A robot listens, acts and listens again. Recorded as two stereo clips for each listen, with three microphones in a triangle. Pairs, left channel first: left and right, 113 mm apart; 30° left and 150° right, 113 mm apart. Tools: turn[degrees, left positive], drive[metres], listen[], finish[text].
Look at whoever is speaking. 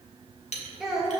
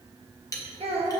Thought: The child speaking: straight behind.
Action: turn[180]
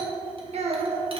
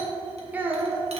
Thought: The child speaking is now 85° right.
Action: turn[-85]
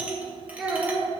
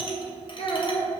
Thought: The child speaking is now 10° right.
Action: turn[-10]
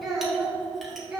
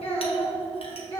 Thought: The child speaking is now 10° right.
Action: turn[-10]
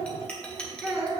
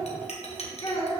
Action: finish[Facing the child speaking.]